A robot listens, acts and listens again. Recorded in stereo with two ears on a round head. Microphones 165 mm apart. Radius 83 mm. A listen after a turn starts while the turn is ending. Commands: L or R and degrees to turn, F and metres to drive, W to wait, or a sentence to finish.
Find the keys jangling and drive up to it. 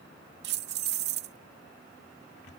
R60
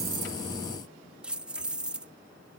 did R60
F1.0
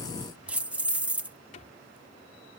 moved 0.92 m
R10
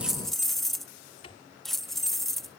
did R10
F1.0
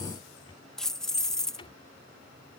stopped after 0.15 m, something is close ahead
I am next to the keys jangling.